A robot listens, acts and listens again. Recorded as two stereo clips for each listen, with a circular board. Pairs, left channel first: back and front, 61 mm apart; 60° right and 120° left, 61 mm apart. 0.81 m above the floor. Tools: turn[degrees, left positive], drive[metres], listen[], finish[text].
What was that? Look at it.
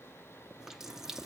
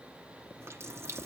Thought: The running tap: 80° left.
Action: turn[80]
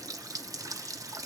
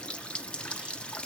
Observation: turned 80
Thought: The running tap is now 10° left.
Action: turn[10]
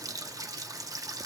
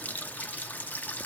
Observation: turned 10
Action: finish[Facing the running tap.]